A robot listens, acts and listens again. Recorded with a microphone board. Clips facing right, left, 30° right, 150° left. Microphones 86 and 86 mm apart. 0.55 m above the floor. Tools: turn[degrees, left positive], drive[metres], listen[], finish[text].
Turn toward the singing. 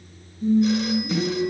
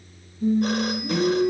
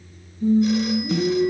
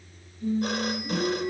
Thought: The singing: 30° left.
Action: turn[30]
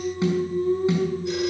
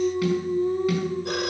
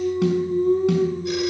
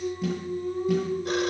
Thought: The singing is now 10° left.
Action: turn[10]
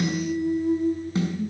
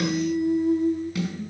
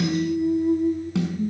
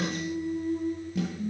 Action: finish[Found it: singing, straight ahead, over 4 m away.]